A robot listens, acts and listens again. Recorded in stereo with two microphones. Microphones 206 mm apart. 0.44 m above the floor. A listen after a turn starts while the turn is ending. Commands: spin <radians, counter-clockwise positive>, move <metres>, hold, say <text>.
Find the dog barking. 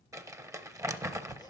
hold
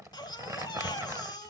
hold
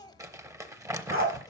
spin -1.57
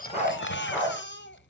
say Facing the dog barking.